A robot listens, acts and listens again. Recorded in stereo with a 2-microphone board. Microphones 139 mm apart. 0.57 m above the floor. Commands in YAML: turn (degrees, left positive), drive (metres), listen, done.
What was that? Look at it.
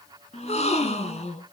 turn: 50
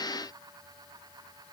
listen: true
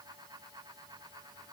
done: "I heard a gasp, but can't make it out now. It was about straight ahead or 80° left."